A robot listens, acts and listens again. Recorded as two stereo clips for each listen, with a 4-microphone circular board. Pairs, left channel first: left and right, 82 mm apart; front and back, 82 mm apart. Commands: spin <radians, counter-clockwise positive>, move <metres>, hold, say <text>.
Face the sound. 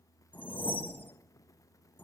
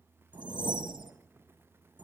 spin 2.79
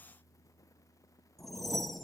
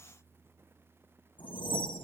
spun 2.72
say Found it: a whoosh, straight ahead, 1 to 2 m away.